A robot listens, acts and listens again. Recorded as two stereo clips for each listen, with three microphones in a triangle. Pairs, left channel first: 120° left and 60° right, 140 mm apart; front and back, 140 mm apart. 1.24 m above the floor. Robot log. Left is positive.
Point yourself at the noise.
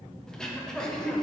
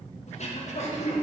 note: The throat clearing: 35° left.
cmd yaw +35
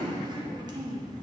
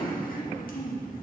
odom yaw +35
end: Found it: throat clearing, straight ahead.